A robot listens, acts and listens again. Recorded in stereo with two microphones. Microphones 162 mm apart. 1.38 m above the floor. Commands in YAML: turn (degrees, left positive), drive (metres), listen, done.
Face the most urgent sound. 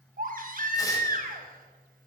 turn: -60
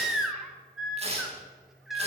done: "Facing the baby crying."